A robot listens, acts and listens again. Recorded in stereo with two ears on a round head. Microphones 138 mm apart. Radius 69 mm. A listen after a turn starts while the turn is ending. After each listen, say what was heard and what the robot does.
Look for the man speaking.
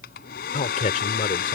The man speaking: about 50° left or 130° left. Turn 50° left.
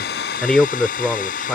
Found it: a man speaking, straight ahead.